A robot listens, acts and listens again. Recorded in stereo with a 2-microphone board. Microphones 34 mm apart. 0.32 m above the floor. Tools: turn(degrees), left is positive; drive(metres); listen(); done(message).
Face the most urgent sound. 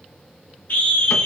turn(degrees=70)
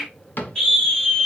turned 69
turn(degrees=25)
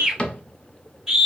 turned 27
done("Facing the scream.")